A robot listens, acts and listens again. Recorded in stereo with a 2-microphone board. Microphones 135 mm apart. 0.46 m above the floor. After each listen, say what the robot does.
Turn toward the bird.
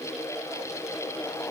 Keep listening.
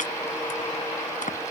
Keep listening.
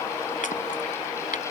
I can't make out a bird, only chopping.